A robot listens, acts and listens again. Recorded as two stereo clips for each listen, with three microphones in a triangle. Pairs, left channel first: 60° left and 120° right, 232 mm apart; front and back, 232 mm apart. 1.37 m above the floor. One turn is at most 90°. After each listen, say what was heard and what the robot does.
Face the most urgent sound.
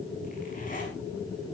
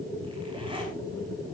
Keep listening.
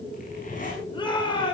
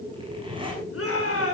The shout: 10° right. Turn 10° right.
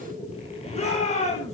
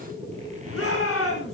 Facing the shout, over 4 m away.